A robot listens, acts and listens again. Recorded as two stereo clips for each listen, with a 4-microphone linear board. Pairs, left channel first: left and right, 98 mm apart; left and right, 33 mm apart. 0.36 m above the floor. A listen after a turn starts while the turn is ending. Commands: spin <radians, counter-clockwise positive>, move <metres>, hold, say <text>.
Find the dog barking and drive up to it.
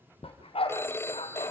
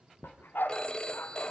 spin 1.22
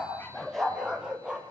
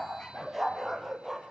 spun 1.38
spin -0.17
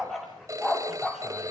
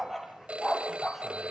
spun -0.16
move 1.0
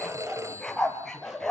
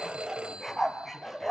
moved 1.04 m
move 1.0
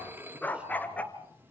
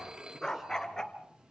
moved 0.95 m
spin 0.26
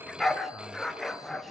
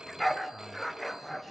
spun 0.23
move 1.0
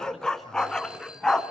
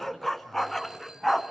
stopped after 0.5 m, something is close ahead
say Arrived at the dog barking, straight ahead.